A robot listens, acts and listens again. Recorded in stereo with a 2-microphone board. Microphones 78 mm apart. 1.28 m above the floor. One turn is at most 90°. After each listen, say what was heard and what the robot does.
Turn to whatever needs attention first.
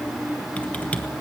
Keep listening.
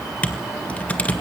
Keep listening.
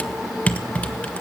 I can't make out anything urgent, only typing on a keyboard.